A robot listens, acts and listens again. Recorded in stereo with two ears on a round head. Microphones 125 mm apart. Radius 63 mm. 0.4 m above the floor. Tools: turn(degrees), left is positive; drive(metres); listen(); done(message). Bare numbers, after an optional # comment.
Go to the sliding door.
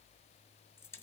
listen()
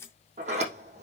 # The sliding door: about 55° right or 125° right.
turn(-55)
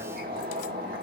# So it is at 75° right.
turn(-75)
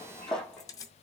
drive(1.0)
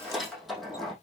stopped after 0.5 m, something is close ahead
done("Something is in my way. I am facing the sliding door but have not reached it.")